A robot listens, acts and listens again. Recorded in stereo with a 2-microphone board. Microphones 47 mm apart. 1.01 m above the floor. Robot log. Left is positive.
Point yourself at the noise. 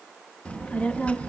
note: The child speaking: about 30° left or 150° left.
cmd yaw +30
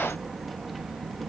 end: Found it: a child speaking, straight ahead.